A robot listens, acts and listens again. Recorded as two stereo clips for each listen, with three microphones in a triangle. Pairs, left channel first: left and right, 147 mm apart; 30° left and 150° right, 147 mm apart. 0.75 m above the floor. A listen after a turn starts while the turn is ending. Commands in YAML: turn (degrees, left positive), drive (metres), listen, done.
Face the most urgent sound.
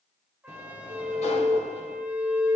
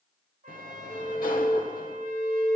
turn: -50
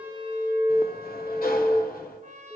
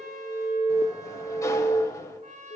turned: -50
done: "Found it: an alarm, straight ahead."